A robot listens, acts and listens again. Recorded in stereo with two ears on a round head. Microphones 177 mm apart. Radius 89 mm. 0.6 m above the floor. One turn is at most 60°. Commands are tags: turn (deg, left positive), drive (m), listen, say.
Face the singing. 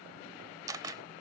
<listen/>
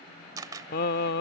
<turn deg="55"/>
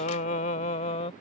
<turn deg="30"/>
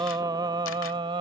<turn deg="-25"/>
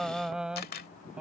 <say>Found it: singing, straight ahead.</say>